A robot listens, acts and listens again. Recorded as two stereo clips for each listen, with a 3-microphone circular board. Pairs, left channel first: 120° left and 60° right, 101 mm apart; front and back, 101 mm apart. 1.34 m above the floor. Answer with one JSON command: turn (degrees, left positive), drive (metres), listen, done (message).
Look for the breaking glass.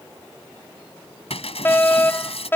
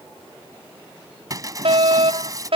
{"turn": 125}
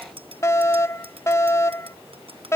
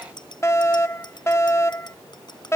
{"done": "Facing where the breaking glass came from. I can't hear it now."}